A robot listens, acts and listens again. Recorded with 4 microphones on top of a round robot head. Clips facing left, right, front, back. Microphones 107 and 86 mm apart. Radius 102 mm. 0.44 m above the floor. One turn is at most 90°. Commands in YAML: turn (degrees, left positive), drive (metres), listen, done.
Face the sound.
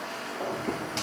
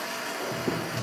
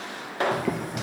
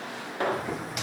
turn: -30
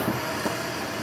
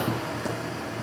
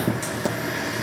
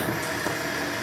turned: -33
done: "Facing the boiling, 2 to 4 m away."